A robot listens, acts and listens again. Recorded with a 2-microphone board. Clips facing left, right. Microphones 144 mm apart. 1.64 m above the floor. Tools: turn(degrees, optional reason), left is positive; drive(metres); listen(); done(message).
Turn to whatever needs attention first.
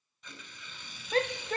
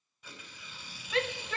turn(degrees=40, reason="The shout: about 40° left or 140° left.")
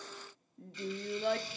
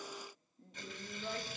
turn(degrees=100, reason="So it is at 100° left.")
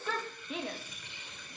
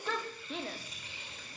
done("Found it: a shout, straight ahead, under 1 m away.")